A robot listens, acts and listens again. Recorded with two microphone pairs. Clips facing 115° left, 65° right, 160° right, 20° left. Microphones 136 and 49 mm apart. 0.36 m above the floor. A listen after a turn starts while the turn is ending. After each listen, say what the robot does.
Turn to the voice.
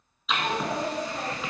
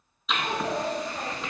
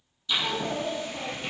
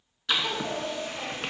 Turn 130° left.
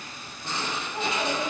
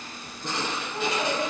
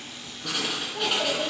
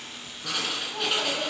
Turn 35° left.
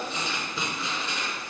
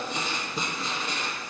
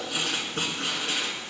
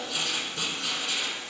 Keep listening.
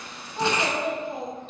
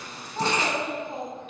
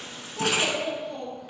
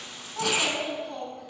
Facing the child speaking.